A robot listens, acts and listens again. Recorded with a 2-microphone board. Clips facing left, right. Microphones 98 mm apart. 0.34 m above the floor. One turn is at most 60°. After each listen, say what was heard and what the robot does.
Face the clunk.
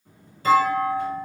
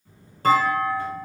The clunk: about 55° right or 125° right. Turn 55° right.
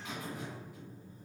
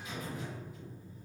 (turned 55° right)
Keep listening.
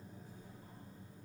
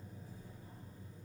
I heard a clunk, but can't make it out now. It was about straight ahead or 70° right.